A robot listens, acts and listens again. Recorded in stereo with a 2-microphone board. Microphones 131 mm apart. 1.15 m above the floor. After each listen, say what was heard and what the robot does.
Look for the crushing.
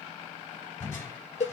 The crushing: about 20° left or 160° left. Turn 20° left.
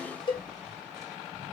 Facing the crushing.